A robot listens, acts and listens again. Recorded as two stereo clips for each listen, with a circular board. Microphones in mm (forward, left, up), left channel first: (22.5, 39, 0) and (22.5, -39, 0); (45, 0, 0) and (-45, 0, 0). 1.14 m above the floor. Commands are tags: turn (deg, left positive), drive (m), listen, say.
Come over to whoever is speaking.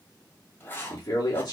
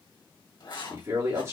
<turn deg="125"/>
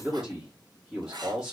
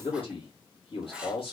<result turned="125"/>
<drive m="1.0"/>
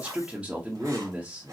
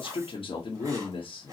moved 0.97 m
<turn deg="-10"/>
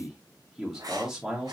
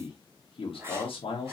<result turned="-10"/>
<drive m="1.0"/>
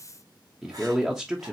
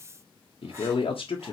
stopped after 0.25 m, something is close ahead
<say>Arrived at the man speaking, straight ahead.</say>